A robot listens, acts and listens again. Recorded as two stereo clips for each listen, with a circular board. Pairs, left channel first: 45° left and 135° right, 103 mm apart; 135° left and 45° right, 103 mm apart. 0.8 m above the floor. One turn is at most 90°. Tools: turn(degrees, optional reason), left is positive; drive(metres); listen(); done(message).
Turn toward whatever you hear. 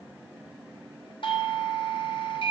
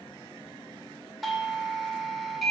turn(degrees=45, reason="The doorbell: 45° left.")
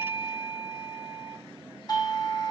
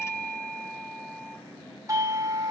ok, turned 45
turn(degrees=10, reason="The doorbell is now 10° left.")
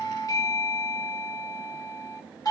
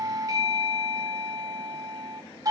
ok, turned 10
done("Found it: a doorbell, straight ahead, 1 to 2 m away.")